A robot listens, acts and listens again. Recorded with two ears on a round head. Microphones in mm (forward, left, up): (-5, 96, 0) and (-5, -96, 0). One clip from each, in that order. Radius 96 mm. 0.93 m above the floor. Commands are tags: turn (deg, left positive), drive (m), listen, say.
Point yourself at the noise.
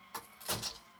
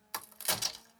<turn deg="-65"/>
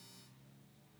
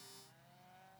<listen/>
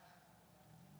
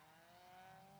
<say>I heard a crack, but can't make it out now. It was about straight ahead or 50° right.</say>